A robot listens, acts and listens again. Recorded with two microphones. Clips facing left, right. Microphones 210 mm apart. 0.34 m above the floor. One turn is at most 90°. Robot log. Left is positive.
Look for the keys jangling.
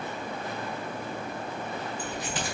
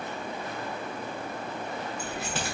note: The keys jangling: about 75° right or 105° right.
cmd yaw -75
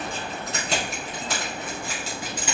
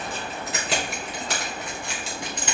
note: So it is at 10° left.
cmd yaw +10
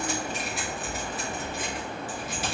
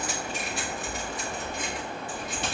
end: Found it: keys jangling, straight ahead, 2 to 4 m away.